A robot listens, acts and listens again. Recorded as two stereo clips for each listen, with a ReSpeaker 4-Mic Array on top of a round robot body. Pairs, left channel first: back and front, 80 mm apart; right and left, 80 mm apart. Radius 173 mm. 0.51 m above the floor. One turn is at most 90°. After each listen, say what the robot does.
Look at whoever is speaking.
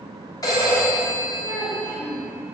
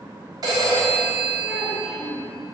Turn 90° left.
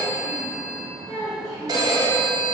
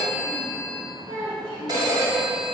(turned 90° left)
Turn 90° left.
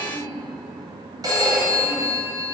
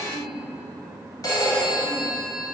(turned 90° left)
Facing the child speaking, over 4 m away.